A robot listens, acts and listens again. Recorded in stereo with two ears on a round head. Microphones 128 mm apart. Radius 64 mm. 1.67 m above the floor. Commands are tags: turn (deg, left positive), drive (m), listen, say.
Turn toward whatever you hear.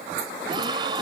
<turn deg="-30"/>
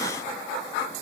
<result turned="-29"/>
<listen/>
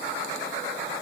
<say>I heard a gasp, but can't make it out now. It was about 5° right or 120° right.</say>